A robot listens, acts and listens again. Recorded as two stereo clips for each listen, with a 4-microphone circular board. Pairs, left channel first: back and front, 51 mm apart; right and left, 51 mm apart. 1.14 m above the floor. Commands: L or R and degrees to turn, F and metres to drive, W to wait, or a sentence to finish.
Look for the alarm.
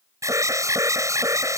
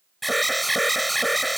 Facing the alarm.